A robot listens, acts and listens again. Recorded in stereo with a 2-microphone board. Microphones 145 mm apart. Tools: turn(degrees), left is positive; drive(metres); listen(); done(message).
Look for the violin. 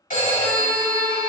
turn(degrees=25)
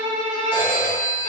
turn(degrees=130)
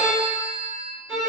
done("Facing the violin.")